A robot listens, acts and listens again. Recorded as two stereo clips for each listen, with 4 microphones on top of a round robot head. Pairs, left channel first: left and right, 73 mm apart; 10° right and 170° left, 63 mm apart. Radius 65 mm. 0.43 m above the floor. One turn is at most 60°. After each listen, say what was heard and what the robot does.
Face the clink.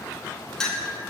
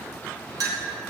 The clink: 170° left. Turn 60° left.
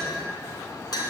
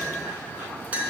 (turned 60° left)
The clink is now 105° left. Turn 60° left.
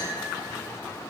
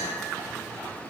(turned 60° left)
Nothing new. It was at 45° left. Turn 45° left.
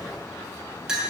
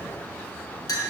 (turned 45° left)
The clink is now 10° right. Turn 10° right.
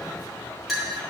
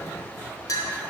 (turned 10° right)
Facing the clink, 1 to 2 m away.